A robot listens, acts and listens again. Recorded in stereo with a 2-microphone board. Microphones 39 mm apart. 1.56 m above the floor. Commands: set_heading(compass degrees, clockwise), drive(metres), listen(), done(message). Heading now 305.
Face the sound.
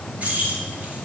set_heading(345)
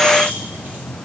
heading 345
listen()
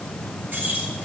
set_heading(35)
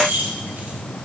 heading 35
set_heading(105)
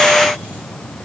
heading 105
listen()
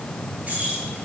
set_heading(140)
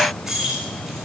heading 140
done("Facing the keys jangling.")